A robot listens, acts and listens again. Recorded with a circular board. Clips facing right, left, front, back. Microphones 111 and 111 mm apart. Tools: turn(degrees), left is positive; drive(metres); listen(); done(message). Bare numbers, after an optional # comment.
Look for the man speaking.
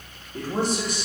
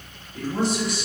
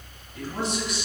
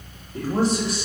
# The man speaking: 125° right.
turn(-125)
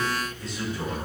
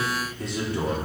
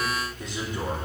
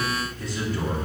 # The man speaking is now 75° left.
turn(75)
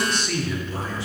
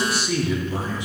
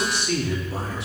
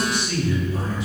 # The man speaking is now 20° left.
turn(20)
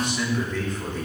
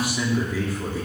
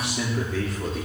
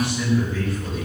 # The man speaking is now 10° left.
turn(10)
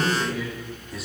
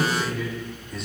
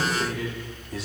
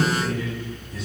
done("Found it: a man speaking, straight ahead, 2 to 4 m away.")